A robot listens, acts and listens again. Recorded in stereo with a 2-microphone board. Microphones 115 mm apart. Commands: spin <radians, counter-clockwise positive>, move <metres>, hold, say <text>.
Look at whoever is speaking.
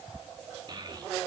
spin -0.70
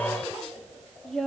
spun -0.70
say Found it: a child speaking, straight ahead.